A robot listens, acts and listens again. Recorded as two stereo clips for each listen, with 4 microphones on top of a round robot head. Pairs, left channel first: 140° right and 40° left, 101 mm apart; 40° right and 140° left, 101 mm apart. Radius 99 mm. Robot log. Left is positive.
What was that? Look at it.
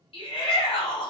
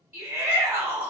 note: The shout: 140° right.
cmd yaw -140
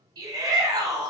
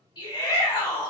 end: Facing the shout.